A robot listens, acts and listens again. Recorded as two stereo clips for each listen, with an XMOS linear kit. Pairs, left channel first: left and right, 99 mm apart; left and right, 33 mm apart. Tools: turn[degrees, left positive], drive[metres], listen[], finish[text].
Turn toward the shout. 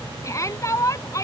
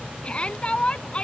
Thought: The shout: about 30° left or 150° left.
Action: turn[30]
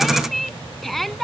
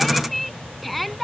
Action: finish[Found it: a shout, straight ahead.]